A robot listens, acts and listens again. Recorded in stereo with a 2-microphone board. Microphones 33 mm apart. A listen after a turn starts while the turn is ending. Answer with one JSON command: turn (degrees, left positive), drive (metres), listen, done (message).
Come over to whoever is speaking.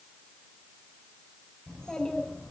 {"turn": 25}
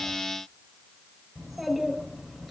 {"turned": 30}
{"drive": 1.0}
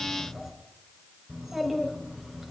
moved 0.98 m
{"drive": 1.0}
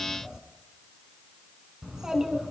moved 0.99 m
{"turn": -15}
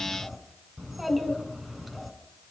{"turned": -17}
{"drive": 1.0}
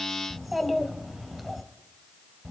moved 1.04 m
{"drive": 1.0}
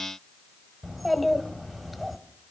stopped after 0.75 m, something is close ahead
{"done": "I am next to the child speaking."}